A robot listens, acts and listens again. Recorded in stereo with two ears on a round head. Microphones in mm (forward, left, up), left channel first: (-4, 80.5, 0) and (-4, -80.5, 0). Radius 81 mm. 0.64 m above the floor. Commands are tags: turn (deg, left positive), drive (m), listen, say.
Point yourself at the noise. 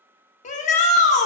<turn deg="40"/>
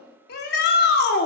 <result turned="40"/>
<turn deg="90"/>
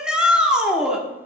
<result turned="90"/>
<say>Facing the shout, under 1 m away.</say>